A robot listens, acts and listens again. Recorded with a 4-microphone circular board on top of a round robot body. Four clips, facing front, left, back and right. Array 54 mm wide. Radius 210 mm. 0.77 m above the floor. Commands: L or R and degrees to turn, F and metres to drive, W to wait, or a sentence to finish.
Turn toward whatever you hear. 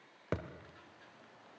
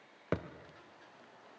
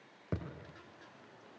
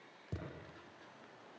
L65
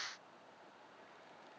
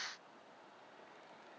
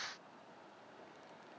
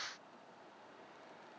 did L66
Facing where the thud came from. I can't hear it now.